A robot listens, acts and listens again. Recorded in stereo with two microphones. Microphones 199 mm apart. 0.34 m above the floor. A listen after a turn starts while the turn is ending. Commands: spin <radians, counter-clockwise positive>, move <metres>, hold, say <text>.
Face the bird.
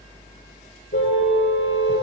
hold
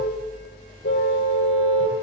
hold
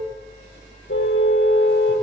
say I can't make out a bird, only a car horn.